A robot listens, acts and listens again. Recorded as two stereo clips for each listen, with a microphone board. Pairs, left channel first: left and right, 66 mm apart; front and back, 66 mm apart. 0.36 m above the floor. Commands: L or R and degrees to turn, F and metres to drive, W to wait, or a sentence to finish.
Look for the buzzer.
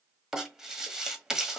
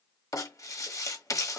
W
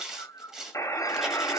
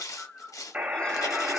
L110
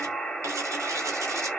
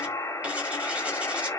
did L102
Facing the buzzer, 1 to 2 m away.